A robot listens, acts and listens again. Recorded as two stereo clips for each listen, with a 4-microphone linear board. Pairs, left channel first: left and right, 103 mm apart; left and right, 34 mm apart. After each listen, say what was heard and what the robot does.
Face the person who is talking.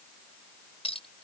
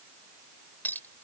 Keep listening.
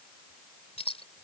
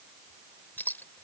Keep listening.
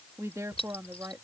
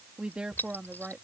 The woman speaking: about 30° right or 150° right. Turn 30° right.
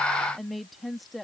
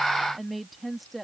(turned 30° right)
Found it: a woman speaking, straight ahead.